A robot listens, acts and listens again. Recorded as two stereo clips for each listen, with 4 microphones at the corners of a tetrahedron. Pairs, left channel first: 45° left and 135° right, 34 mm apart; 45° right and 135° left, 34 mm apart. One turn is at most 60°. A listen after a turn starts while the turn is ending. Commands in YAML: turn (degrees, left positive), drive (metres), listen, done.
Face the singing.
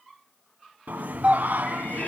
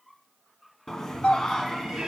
turn: -60
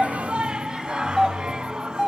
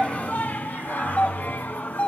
turn: -60
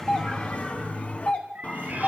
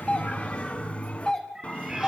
done: "Facing the singing."